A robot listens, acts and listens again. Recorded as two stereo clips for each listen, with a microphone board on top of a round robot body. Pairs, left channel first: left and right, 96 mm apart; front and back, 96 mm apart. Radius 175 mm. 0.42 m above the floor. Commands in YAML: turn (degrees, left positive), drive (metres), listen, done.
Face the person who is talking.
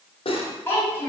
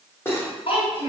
turn: 25
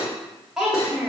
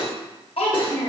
done: "Found it: a child speaking, straight ahead."